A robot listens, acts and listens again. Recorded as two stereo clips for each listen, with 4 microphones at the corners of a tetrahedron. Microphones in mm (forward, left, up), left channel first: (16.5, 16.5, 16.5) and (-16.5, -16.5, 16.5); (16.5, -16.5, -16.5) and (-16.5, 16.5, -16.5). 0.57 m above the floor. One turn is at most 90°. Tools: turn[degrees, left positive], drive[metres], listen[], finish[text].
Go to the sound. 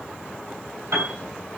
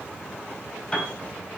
Thought: The piano: 110° right.
Action: turn[-90]
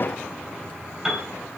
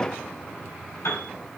Thought: The piano is now 55° right.
Action: turn[-55]
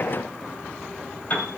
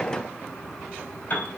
Action: drive[1.0]
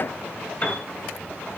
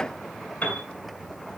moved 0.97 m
Action: drive[1.0]
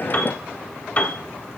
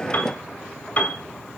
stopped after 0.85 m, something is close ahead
Action: finish[Arrived at the piano, straight ahead.]